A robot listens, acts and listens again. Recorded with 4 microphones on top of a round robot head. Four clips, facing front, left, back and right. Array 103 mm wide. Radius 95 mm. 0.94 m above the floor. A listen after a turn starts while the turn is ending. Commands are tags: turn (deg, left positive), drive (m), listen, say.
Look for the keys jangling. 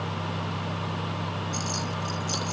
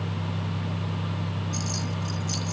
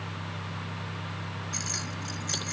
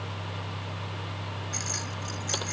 <turn deg="-125"/>
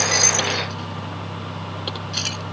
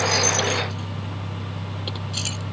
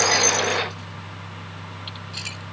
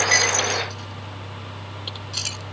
<turn deg="-20"/>
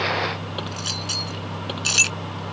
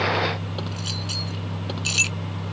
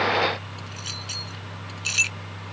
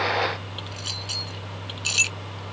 <say>Found it: keys jangling, straight ahead.</say>